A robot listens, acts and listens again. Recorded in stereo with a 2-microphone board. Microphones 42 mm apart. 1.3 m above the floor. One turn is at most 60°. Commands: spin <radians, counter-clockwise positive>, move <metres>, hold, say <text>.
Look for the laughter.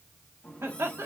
spin -1.05
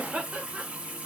spin -0.61
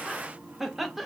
say Facing the laughter.